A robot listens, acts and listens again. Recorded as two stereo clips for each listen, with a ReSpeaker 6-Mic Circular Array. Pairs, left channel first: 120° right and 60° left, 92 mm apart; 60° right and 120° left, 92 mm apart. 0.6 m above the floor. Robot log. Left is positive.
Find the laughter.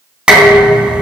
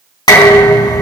cmd idle
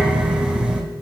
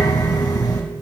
cmd idle
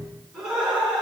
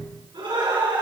note: The laughter: 145° left.
cmd yaw +145
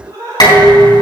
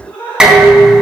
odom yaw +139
note: The laughter is now 15° left.
cmd yaw +15
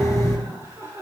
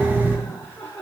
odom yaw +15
end: Facing the laughter.